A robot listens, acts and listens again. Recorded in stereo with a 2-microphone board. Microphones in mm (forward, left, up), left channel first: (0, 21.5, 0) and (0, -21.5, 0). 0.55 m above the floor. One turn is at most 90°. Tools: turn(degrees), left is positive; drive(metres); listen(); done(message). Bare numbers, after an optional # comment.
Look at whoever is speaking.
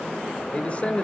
# The man speaking: about 25° left or 155° left.
turn(25)
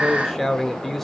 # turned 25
done("Facing the man speaking.")